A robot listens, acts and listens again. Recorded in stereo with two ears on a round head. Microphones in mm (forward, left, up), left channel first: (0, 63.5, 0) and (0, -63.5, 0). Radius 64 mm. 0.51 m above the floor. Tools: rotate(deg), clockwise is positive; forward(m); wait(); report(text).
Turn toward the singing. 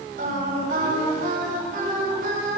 rotate(65)
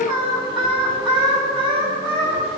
rotate(40)
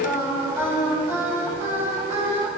rotate(20)
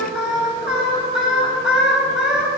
report("Facing the singing.")